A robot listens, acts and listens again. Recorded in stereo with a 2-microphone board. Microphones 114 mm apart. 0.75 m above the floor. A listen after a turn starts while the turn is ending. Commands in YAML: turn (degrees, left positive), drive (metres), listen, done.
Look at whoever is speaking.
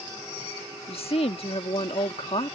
turn: 55
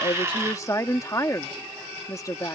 turn: 35
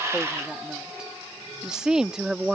done: "Found it: a woman speaking, straight ahead."